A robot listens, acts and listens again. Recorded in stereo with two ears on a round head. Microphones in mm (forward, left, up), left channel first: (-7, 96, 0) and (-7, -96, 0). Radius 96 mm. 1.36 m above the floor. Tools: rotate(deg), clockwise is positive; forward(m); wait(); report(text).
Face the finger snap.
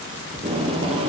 wait()
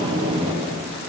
wait()
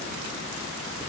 report("I can't make out a finger snap, only tape being pulled.")